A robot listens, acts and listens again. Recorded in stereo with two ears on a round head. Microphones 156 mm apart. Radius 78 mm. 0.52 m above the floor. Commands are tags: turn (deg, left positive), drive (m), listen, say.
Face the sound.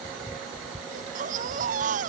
<turn deg="-45"/>
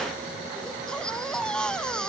<say>Found it: a baby crying, straight ahead.</say>